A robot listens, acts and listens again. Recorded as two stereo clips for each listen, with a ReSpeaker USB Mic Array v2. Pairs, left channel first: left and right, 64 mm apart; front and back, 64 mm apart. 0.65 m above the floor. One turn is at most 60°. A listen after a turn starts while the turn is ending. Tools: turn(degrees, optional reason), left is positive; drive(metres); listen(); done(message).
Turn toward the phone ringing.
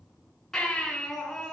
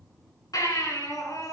listen()
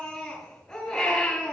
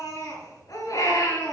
listen()
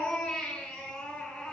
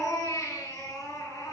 done("I can't make out a phone ringing, only a baby crying.")